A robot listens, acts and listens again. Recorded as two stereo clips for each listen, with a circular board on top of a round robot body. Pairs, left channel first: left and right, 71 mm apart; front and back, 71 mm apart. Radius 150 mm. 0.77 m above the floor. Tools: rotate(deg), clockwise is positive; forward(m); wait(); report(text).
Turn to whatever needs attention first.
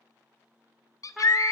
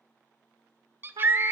rotate(-125)
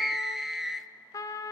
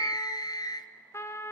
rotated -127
report("Facing the scream.")